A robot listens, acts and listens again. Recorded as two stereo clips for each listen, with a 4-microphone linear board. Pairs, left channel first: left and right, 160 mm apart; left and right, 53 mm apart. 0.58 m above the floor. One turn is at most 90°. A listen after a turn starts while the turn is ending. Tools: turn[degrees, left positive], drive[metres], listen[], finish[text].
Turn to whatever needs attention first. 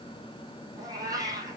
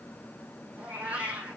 Action: listen[]
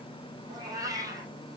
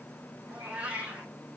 Action: listen[]
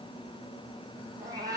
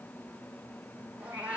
Action: finish[I can't make out anything urgent to turn to.]